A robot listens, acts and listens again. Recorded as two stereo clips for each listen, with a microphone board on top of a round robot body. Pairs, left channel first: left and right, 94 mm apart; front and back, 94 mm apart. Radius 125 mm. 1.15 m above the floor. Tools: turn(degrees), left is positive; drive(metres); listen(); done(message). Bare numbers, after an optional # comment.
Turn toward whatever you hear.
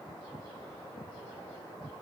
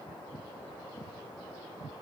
listen()
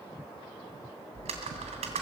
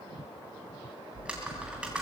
# The typing on a keyboard: 100° right.
turn(-100)
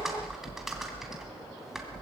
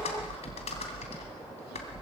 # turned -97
done("Facing the typing on a keyboard, 2 to 4 m away.")